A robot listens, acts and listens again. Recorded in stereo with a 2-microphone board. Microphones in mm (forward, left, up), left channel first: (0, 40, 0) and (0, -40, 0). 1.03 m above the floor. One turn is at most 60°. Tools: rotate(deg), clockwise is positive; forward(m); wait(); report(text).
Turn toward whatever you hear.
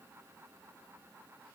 wait()
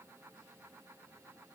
wait()
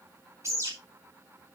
rotate(35)
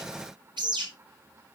rotate(60)
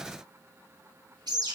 rotate(60)
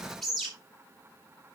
report("Found it: a bird, straight ahead, 2 to 4 m away.")